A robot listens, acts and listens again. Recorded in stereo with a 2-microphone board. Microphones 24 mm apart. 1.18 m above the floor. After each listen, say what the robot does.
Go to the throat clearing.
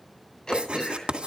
Turn 35° left.
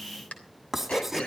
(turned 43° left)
Turn 100° left.
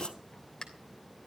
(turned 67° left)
Turn 35° left.
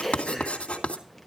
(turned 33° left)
Drive 1.0 m forward.
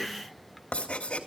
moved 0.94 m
Drive 1.0 m forward.
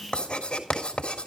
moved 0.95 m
Keep listening.
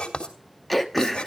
Drive 1.0 m forward.
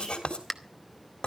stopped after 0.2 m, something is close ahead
I am next to the throat clearing.